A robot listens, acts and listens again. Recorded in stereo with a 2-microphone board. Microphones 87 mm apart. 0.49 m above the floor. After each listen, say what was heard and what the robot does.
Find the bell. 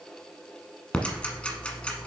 Keep listening.
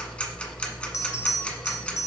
The bell: about 35° left or 145° left. Turn 35° left.
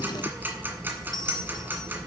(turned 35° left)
So it is at 100° left. Turn 100° left.
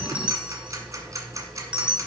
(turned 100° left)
The bell is now 15° right. Turn 15° right.
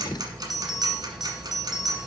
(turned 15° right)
Found it: a bell, straight ahead.